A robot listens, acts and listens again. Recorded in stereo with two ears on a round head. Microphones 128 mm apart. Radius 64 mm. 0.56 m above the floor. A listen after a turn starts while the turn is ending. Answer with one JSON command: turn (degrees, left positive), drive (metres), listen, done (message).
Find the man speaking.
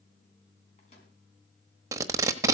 {"listen": true}
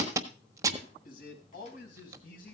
{"turn": 60}
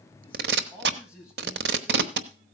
{"turn": -10}
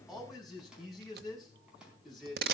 {"done": "Found it: a man speaking, straight ahead, over 4 m away."}